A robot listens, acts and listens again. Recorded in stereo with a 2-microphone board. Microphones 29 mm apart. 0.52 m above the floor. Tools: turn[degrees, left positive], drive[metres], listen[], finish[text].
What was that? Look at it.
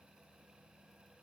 Action: listen[]
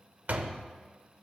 Thought: The door slam: about 65° right or 115° right.
Action: turn[-65]
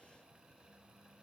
Action: listen[]
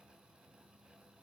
Action: finish[I heard a door slam, but can't make it out now. It was about straight ahead or 50° right.]